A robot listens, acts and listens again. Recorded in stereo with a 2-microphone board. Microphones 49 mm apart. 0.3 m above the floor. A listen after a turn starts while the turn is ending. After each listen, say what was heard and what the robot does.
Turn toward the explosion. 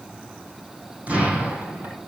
The explosion: about 30° right or 150° right. Turn 30° right.
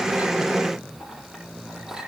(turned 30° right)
Keep listening.
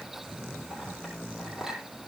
I heard an explosion, but can't make it out now. It was about straight ahead or 120° right.